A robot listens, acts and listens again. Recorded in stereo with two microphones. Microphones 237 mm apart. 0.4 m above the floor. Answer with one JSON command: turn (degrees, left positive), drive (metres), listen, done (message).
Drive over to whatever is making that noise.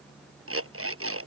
{"turn": -70}
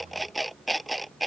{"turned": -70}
{"drive": 1.0}
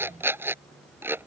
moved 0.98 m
{"turn": -10}
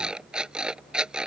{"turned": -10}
{"drive": 1.0}
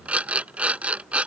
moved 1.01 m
{"drive": 1.0}
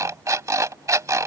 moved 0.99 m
{"turn": -15}
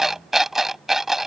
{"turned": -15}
{"drive": 1.0}
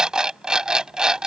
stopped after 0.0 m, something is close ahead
{"done": "Arrived at the alarm clock, straight ahead."}